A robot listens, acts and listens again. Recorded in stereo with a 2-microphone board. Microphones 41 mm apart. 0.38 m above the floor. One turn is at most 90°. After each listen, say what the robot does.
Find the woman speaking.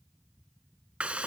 Keep listening.
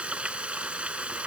Keep listening.
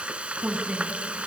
Turn 25° right.
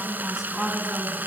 Turn 15° right.
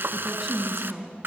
Turn 30° right.
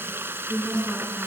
Turn 15° left.
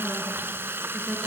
Keep listening.
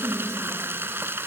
Found it: a woman speaking, straight ahead, over 4 m away.